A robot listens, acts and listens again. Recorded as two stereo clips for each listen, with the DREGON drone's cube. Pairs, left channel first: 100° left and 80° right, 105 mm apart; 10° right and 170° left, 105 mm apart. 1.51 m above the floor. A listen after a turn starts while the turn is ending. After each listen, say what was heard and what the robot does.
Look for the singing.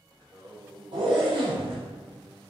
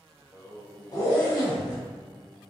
The singing: 125° right. Turn 125° right.
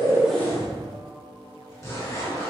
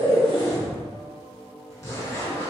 The singing is now 25° right. Turn 25° right.
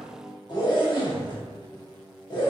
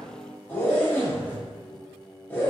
The singing is now 10° right. Turn 10° right.
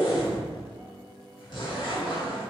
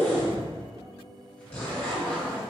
Facing the singing.